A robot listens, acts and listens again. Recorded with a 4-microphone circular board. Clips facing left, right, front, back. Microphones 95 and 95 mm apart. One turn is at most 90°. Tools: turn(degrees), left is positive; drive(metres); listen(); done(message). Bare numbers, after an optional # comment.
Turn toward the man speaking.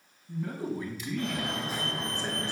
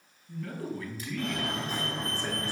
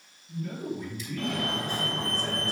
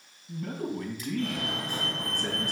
# The man speaking: 160° left.
turn(90)
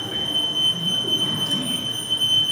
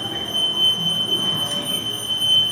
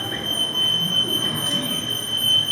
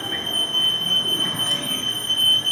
# Nothing new. It was at 70° left.
turn(70)
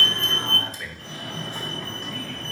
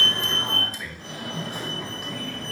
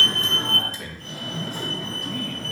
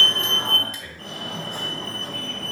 # The man speaking is now 10° right.
turn(-10)
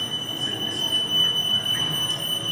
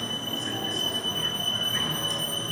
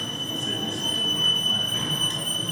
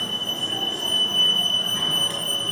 listen()
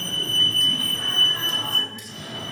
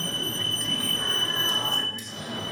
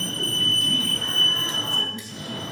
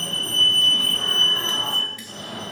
done("Found it: a man speaking, straight ahead.")